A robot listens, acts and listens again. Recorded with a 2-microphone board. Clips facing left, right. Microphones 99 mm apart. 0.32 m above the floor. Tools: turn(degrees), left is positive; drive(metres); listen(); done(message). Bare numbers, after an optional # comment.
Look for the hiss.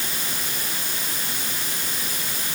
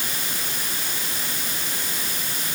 listen()
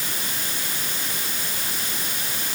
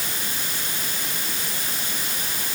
listen()
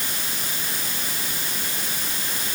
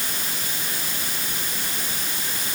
done("I can't make out a hiss.")